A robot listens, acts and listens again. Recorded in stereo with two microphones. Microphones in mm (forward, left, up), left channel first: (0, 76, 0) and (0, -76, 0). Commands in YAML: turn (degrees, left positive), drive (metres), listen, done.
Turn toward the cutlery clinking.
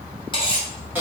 turn: 35
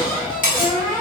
turn: 115
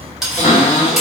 done: "Facing the cutlery clinking."